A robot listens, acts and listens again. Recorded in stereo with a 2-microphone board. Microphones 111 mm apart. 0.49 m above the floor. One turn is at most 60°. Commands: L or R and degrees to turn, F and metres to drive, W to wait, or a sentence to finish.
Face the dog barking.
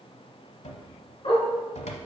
L55
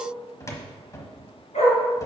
L60
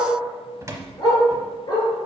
L40
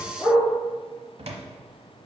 Facing the dog barking.